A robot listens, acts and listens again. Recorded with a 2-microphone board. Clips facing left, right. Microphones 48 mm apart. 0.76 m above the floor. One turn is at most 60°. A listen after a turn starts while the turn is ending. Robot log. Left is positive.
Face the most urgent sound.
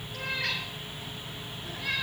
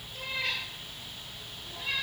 cmd idle
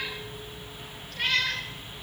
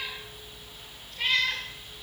cmd idle
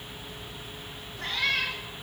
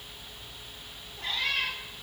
end: I can't make out anything urgent, only a cat meowing.